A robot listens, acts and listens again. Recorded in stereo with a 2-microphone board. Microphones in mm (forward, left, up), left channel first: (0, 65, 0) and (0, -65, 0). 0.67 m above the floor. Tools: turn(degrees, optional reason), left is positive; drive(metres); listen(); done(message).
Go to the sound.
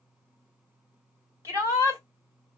turn(degrees=-20, reason="The shout: about 20° right or 160° right.")
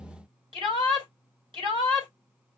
turn(degrees=-140, reason="So it is at 140° right.")
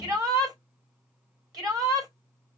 turn(degrees=-35, reason="The shout is now 35° right.")
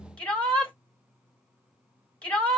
drive(metres=1.0)
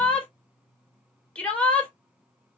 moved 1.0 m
turn(degrees=10, reason="The shout is now 10° left.")
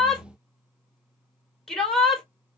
drive(metres=1.0)
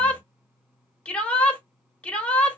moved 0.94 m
turn(degrees=10, reason="The shout is now 10° left.")
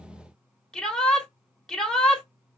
drive(metres=1.0)
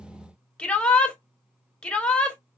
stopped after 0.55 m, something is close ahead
turn(degrees=10, reason="The shout is now 10° left.")
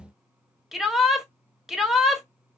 done("I am next to the shout.")